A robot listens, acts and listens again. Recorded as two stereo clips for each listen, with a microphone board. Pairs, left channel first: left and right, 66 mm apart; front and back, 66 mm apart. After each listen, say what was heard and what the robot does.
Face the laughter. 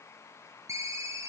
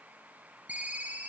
Keep listening.
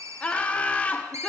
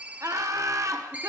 The laughter: 155° left. Turn 155° left.
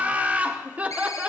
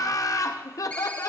The laughter is now 25° right. Turn 25° right.
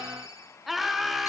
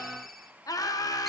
Facing the laughter.